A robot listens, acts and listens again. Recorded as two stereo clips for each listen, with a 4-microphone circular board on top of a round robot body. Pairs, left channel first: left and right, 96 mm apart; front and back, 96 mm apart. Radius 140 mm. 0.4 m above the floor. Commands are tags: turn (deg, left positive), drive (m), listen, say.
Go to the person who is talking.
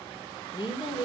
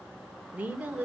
<turn deg="110"/>
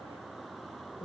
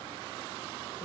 <turn deg="55"/>
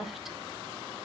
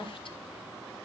<drive m="1.0"/>
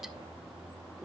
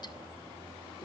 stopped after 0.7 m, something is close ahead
<say>I am next to the woman speaking.</say>